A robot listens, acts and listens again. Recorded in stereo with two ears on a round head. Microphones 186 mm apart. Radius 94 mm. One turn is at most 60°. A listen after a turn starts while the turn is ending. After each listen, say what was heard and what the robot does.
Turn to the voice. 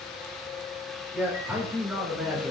Turn 30° right.
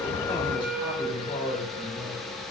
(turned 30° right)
So it is at 25° left. Turn 25° left.
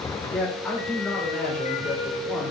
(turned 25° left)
Facing the man speaking.